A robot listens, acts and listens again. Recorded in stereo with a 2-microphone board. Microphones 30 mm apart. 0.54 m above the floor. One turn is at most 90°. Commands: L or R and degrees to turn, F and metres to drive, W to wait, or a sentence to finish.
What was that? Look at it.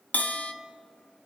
L60
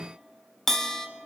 L15
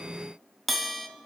Found it: a bell, straight ahead, 1 to 2 m away.